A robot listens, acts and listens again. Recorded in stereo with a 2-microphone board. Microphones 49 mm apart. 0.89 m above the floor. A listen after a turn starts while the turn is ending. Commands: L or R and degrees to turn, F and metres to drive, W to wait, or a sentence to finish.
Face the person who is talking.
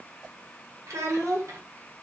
R90
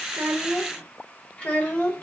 L35
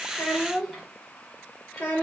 L20
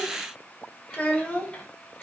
L20
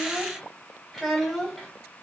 Facing the child speaking.